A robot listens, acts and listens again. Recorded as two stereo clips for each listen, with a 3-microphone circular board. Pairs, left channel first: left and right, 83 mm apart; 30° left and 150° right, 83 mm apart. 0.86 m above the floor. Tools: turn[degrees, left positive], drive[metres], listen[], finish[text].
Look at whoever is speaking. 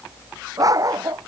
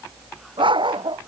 Action: listen[]
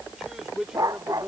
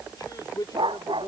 Action: finish[Facing the man speaking.]